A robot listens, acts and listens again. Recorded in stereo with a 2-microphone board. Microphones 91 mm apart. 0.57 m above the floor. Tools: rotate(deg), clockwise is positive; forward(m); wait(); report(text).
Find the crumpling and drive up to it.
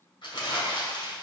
rotate(-55)
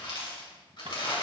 rotate(-65)
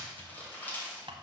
rotate(-20)
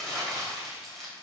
forward(1.0)
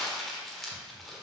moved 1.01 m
forward(1.0)
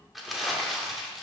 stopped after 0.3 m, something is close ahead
report("Arrived at the crumpling, straight ahead.")